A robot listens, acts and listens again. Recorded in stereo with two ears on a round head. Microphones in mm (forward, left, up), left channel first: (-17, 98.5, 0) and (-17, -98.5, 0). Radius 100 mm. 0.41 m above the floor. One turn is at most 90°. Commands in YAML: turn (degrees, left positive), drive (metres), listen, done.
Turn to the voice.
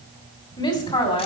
turn: 25
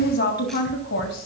turn: 90
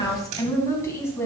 turn: 10
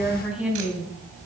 done: "Facing the woman speaking."